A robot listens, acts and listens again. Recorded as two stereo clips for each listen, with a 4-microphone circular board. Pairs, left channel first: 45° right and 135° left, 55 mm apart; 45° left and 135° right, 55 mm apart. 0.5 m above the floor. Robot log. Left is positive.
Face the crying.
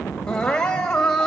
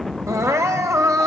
note: The crying: 120° right.
cmd yaw -120
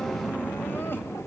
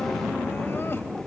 cmd idle
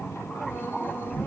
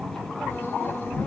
cmd idle
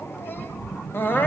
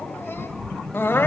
end: Facing the crying.